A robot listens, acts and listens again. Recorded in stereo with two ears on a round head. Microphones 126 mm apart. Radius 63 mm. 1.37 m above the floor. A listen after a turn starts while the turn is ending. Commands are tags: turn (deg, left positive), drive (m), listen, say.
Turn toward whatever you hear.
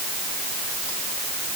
<listen/>
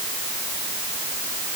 <listen/>
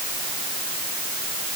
<say>I can't make out anything.</say>